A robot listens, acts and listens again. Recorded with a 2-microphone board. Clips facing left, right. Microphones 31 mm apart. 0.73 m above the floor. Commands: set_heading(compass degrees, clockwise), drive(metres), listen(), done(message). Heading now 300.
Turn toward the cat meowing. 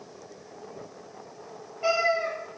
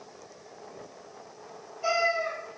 set_heading(265)
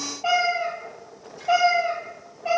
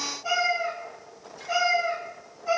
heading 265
set_heading(160)
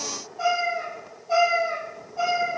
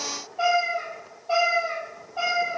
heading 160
set_heading(215)
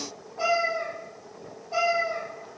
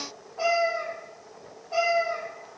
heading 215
set_heading(230)
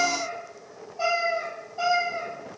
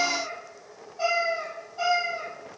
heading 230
done("Found it: a cat meowing, straight ahead, 2 to 4 m away.")